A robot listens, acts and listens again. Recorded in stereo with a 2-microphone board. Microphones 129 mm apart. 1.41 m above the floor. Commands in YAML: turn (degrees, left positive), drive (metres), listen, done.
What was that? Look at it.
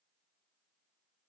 listen: true
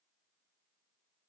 listen: true
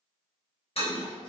turn: 50
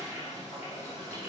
turn: 75
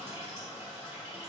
turn: -20
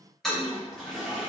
done: "Facing the toilet flushing, 1 to 2 m away."